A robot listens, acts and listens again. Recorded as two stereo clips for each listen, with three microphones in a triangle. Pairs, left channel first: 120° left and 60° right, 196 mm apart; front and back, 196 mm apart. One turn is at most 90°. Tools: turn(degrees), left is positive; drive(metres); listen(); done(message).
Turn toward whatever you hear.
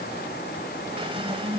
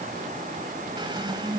turn(degrees=-90)
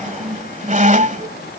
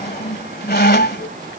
turn(degrees=-20)
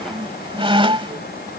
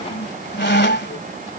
done("Found it: a squeak, straight ahead.")